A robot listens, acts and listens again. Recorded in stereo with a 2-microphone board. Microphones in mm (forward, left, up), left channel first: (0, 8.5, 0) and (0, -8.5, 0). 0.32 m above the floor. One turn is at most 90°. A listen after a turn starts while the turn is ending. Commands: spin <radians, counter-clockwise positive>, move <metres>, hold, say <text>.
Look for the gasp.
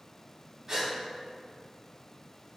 spin -0.70
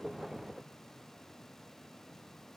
hold
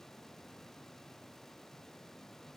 say I heard a gasp, but can't make it out now. It was about straight ahead or 100° right.